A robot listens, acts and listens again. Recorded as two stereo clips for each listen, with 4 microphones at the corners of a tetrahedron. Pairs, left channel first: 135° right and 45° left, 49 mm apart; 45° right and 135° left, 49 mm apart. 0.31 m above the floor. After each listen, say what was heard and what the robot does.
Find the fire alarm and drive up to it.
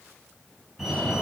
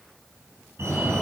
The fire alarm: 135° left. Turn 135° left.
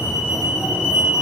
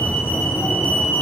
The fire alarm is now 10° right. Turn 10° right.
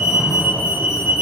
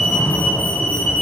Drive 1.0 m forward.
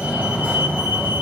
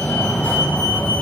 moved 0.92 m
Drive 1.0 m forward.
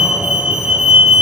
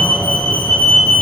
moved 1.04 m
Drive 1.0 m forward.
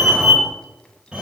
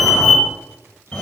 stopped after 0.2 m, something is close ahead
I am next to the fire alarm.